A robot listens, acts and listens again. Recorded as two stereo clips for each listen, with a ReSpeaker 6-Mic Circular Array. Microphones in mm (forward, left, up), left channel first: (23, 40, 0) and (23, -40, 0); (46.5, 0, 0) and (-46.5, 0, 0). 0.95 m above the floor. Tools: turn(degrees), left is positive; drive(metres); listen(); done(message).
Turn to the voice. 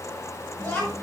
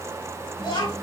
turn(degrees=25)
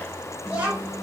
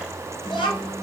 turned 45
turn(degrees=-20)
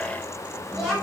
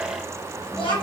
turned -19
done("Facing the child speaking.")